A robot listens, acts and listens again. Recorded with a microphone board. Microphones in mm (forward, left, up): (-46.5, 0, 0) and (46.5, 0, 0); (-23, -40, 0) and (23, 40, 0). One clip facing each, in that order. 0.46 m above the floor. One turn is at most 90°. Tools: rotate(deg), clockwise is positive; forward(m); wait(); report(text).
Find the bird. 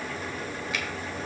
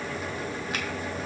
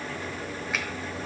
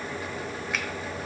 wait()
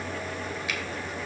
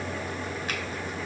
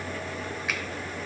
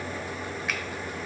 wait()
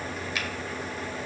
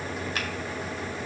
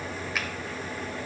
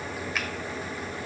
report("I can't make out a bird, only a finger snap.")